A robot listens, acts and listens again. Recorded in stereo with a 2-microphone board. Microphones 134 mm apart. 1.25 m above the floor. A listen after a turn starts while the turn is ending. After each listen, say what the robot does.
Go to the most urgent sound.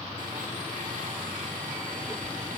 Keep listening.
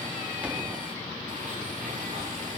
Keep listening.
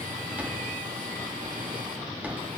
I can't make out anything urgent to turn to.